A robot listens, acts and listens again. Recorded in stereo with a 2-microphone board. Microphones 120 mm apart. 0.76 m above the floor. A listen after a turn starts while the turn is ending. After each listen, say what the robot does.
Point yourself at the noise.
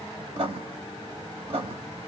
Turn 60° right.
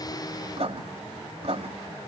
Turn 60° right.
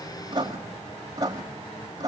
Turn 35° right.
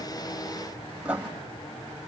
Turn 10° right.
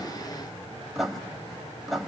Facing the writing.